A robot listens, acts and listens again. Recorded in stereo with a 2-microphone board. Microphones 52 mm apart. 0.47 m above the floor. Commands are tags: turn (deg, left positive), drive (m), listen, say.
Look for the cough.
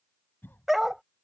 <turn deg="40"/>
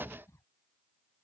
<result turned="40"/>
<turn deg="95"/>
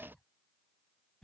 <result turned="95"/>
<turn deg="15"/>
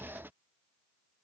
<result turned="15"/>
<listen/>
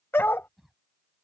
<say>Found it: a cough, straight ahead.</say>